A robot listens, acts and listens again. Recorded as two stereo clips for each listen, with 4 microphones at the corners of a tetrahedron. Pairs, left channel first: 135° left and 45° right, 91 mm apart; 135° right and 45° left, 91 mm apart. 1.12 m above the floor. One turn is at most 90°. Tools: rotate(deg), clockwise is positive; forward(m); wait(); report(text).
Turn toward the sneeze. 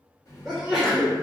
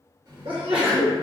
rotate(-40)
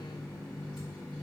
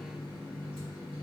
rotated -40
report("I heard a sneeze from this way, but can't make it out now.")